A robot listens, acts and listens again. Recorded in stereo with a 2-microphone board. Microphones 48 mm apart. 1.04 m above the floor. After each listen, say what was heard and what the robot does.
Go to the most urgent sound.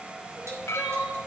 The crying: about 20° right or 160° right. Turn 20° right.
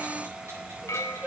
So it is at 140° right. Turn 140° right.
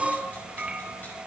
The crying is now 20° right. Turn 20° right.
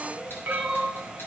Drive 1.0 m forward.
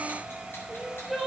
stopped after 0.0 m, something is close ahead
Blocked. The crying is further on, straight ahead.